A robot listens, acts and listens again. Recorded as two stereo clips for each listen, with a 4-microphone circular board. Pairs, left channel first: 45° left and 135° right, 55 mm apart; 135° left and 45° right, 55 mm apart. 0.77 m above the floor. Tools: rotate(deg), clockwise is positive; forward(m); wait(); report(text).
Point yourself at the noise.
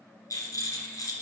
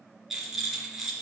rotate(-40)
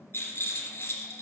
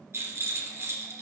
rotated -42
report("Facing the rattle, 2 to 4 m away.")